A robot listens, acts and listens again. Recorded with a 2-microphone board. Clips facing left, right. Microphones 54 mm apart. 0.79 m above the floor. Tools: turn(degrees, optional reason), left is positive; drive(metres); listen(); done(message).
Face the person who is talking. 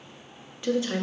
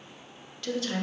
turn(degrees=20, reason="The woman speaking: about 20° left or 160° left.")
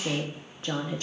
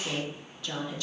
turn(degrees=140, reason="So it is at 140° left.")
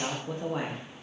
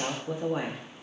done("Found it: a woman speaking, straight ahead, under 1 m away.")